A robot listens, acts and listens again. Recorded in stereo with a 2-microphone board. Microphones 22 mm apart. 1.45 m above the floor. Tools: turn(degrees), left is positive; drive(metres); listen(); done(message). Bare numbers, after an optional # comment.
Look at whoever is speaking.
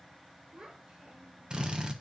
# The child speaking: about 60° right or 120° right.
turn(-60)
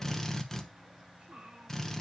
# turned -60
# So it is at 60° right.
turn(-60)
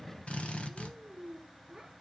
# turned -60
# The child speaking is now 15° right.
turn(-15)
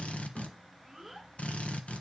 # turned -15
done("Facing the child speaking, over 4 m away.")